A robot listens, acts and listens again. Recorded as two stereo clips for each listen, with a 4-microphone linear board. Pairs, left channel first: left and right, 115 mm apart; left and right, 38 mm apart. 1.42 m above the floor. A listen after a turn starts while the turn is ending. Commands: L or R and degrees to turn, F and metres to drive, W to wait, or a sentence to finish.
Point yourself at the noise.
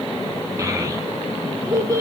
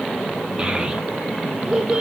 R30
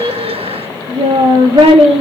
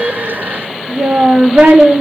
R120
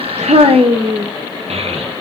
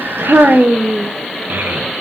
R60
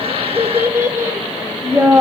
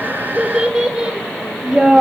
R20
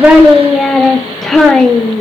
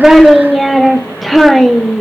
Facing the child speaking.